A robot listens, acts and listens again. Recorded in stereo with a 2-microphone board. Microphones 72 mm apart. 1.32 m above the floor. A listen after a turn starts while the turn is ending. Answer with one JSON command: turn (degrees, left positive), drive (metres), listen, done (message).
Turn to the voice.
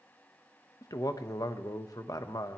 {"turn": 60}
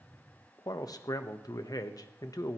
{"turn": 60}
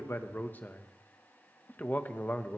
{"turn": 25}
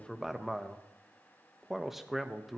{"done": "Facing the man speaking, 1 to 2 m away."}